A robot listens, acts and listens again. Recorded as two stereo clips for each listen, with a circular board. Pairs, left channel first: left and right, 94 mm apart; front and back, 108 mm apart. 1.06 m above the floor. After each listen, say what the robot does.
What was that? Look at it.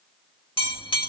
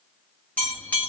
Turn 75° left.
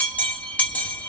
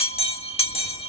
Turn 15° left.
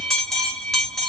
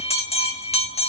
Facing the bell.